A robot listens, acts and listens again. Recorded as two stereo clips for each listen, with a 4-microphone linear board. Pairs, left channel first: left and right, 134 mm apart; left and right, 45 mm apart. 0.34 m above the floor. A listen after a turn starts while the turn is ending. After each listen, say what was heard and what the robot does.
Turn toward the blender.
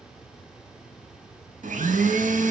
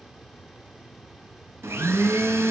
Turn 90° right.
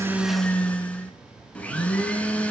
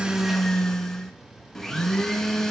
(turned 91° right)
So it is at 10° left. Turn 10° left.
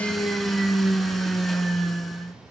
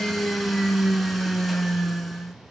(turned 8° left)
Found it: a blender, straight ahead.